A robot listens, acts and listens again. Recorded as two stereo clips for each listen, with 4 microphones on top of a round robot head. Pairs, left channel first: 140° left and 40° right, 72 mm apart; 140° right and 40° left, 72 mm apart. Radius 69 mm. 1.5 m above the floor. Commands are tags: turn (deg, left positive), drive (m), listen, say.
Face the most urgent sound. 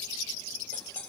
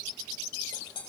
<listen/>
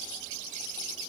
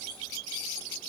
<listen/>
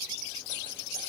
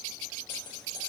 <say>I can't make out anything urgent to turn to.</say>